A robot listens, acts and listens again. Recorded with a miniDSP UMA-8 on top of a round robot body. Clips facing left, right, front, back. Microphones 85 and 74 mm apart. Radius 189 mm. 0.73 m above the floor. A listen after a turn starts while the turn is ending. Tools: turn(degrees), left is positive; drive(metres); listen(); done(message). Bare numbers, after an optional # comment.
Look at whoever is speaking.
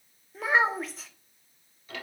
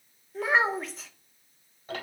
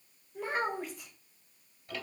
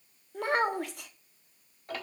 # The child speaking: straight behind.
turn(180)
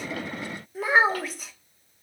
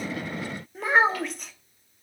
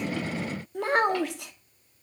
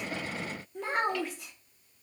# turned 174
done("Found it: a child speaking, straight ahead.")